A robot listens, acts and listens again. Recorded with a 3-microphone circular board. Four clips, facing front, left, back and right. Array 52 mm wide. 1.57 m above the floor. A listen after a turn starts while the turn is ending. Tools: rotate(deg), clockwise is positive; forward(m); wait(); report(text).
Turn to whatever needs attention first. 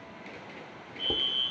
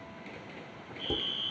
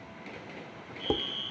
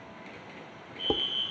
rotate(60)
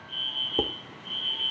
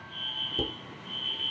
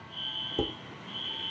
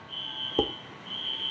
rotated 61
report("Found it: a fire alarm, straight ahead, over 4 m away.")